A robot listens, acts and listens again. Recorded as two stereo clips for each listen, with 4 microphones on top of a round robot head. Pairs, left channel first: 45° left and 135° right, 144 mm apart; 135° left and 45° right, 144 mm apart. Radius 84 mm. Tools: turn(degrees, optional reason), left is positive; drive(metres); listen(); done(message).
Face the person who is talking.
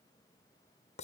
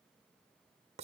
listen()
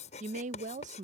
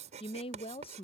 turn(degrees=-175, reason="The woman speaking: 175° right.")
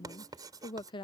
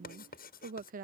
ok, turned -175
turn(degrees=-15, reason="The woman speaking is now 15° right.")
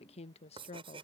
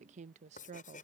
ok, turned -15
done("Found it: a woman speaking, straight ahead.")